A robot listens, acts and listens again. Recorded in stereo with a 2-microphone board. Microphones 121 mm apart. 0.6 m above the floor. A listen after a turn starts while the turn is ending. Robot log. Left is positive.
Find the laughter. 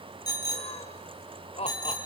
note: The laughter: about 60° left or 120° left.
cmd yaw +60
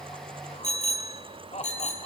note: So it is at 70° left.
cmd yaw +70
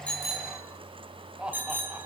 note: The laughter is now 10° right.
cmd yaw -10
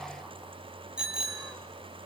cmd idle
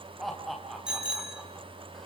end: Found it: laughter, straight ahead, 2 to 4 m away.